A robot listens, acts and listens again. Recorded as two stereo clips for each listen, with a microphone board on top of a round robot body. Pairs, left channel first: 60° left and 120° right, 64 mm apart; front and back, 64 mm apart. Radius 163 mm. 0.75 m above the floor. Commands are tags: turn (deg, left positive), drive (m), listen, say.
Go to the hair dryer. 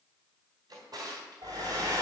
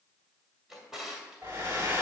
<turn deg="-130"/>
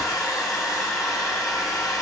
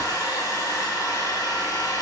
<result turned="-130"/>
<turn deg="25"/>
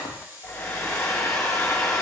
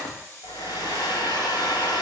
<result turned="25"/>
<turn deg="10"/>
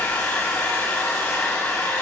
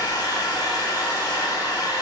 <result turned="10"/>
<drive m="1.0"/>
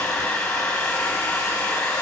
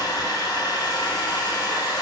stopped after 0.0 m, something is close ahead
<say>Blocked. The hair dryer is further on, straight ahead.</say>